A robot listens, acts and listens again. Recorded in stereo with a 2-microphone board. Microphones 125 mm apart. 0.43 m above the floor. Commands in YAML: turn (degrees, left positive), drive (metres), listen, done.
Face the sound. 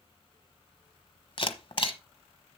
turn: 50
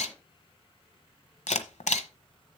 turn: 80
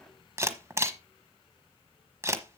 turn: -25
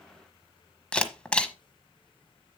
turn: 10
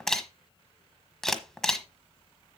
done: "Found it: a camera shutter, straight ahead, 1 to 2 m away."